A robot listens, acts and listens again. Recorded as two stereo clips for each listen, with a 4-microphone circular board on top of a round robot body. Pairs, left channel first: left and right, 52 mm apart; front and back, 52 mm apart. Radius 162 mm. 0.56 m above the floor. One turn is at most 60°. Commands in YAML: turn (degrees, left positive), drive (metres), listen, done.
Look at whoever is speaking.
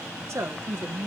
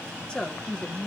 turn: -60
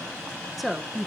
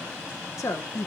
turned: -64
done: "Found it: a woman speaking, straight ahead."